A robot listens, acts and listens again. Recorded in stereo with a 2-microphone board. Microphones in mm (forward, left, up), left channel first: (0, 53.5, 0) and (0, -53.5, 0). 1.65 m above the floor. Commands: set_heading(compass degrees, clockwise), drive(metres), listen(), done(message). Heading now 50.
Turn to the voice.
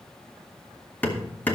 listen()
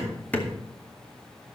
listen()
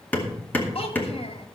set_heading(350)
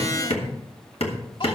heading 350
listen()
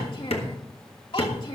set_heading(295)
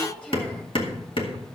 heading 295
set_heading(285)
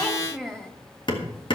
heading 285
done("Found it: a child speaking, straight ahead, 2 to 4 m away.")